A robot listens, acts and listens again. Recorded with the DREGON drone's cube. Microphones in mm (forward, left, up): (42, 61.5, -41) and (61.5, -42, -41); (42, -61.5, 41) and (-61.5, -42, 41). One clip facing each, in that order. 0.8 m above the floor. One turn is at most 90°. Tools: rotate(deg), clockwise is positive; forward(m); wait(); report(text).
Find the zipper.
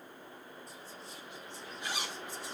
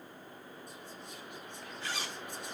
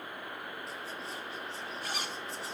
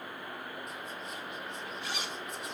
rotate(-30)
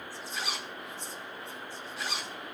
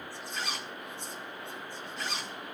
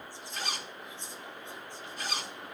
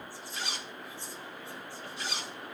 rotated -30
rotate(-15)
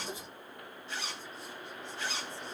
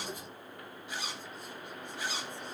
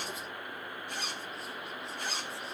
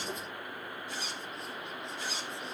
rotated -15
report("Found it: a zipper, straight ahead.")